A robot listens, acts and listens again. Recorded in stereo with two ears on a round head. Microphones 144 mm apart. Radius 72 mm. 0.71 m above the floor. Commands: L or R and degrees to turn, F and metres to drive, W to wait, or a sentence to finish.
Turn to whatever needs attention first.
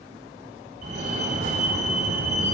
R55
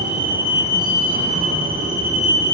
R65
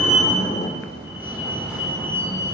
Facing the fire alarm, 2 to 4 m away.